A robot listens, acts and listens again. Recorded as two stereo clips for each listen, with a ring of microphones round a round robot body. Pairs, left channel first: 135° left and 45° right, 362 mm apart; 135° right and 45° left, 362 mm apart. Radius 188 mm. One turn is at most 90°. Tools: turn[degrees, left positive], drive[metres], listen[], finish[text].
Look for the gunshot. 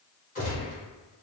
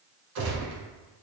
Thought: The gunshot: 65° left.
Action: turn[65]
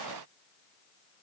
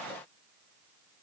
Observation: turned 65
Action: finish[I heard a gunshot from this way, but can't make it out now.]